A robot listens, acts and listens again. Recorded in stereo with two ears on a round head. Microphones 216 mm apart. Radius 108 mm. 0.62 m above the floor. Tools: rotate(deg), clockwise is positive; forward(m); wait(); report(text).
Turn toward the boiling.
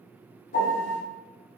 wait()
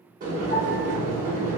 rotate(35)
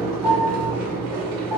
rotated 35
rotate(110)
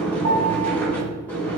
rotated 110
report("Facing the boiling, 1 to 2 m away.")